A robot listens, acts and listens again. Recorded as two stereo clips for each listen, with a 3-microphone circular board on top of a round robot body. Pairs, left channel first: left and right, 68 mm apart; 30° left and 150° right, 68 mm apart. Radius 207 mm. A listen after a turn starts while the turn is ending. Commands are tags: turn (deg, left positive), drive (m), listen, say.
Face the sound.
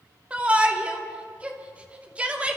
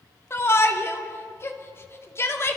<turn deg="-20"/>
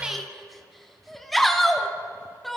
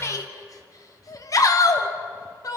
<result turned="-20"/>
<say>Found it: a shout, straight ahead.</say>